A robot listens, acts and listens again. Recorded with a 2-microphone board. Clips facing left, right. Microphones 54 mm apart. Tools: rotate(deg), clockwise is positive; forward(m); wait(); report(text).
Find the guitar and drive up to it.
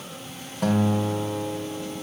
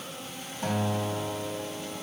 rotate(-65)
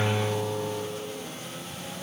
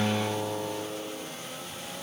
rotate(-20)
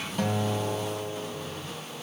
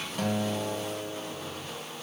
forward(1.0)
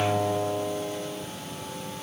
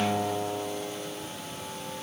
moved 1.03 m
forward(1.0)
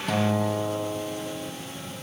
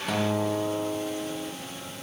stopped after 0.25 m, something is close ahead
report("Arrived at the guitar, straight ahead.")